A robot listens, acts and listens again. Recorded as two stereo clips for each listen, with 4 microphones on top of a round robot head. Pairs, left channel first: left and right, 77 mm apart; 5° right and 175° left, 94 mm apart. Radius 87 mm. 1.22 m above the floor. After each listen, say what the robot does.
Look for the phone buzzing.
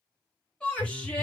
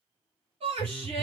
Turn 85° left.
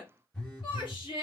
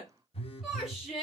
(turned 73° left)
Turn 10° left.
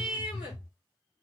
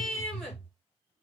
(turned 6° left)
Found it: a phone buzzing, straight ahead, under 1 m away.